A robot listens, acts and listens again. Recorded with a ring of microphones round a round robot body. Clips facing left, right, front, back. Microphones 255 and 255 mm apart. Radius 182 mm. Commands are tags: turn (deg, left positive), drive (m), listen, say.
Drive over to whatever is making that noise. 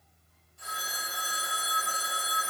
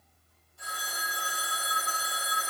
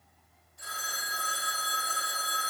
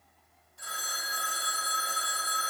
<turn deg="-145"/>
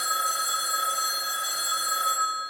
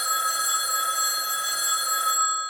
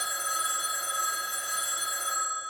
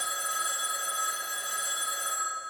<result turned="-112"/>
<turn deg="-30"/>
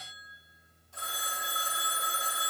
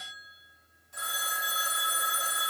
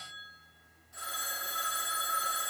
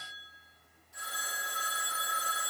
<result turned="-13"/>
<turn deg="-15"/>
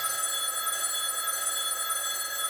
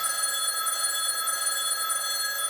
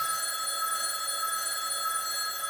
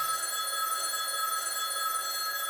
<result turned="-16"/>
<drive m="1.0"/>
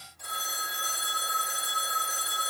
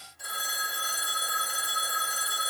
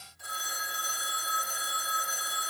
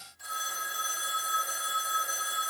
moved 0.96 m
<drive m="1.0"/>
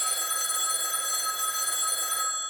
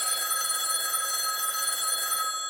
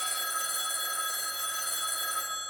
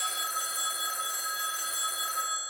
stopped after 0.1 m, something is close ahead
<say>I am next to the phone ringing.</say>